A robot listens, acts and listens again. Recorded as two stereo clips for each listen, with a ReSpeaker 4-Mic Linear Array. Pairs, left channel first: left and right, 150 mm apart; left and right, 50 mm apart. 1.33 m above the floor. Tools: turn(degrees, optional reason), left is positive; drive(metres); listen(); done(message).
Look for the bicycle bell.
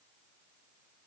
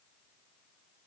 listen()
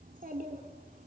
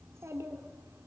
listen()
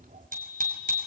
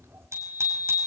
turn(degrees=-70, reason="The bicycle bell: about 70° right or 110° right.")
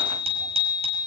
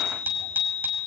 turn(degrees=-45, reason="So it is at 45° right.")
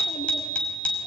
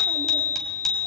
turn(degrees=10, reason="The bicycle bell is now 10° left.")
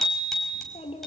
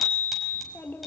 done("Found it: a bicycle bell, straight ahead, over 4 m away.")